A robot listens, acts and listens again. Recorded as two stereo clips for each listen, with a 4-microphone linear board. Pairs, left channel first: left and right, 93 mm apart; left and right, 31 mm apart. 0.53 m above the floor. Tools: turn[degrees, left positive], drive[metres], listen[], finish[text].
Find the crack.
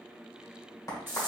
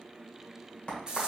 Thought: The crack: about 40° left or 140° left.
Action: turn[40]
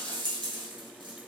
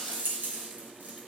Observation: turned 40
Action: listen[]
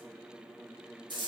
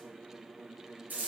Action: finish[I heard a crack, but can't make it out now. It was about straight ahead or 100° left.]